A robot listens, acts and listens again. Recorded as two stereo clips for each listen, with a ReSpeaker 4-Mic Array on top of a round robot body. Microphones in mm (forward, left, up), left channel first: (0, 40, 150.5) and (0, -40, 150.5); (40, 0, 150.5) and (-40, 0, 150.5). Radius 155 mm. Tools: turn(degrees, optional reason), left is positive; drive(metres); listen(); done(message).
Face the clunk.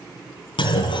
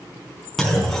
turn(degrees=90, reason="The clunk: 90° left.")
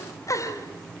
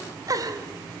done("I heard a clunk from this way, but can't make it out now.")